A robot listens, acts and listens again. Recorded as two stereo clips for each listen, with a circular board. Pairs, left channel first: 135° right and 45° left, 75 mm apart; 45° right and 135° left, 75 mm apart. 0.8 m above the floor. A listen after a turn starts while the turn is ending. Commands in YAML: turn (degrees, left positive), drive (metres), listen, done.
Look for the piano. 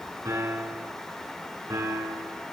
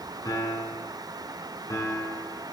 done: "Found it: a piano, straight ahead, over 4 m away."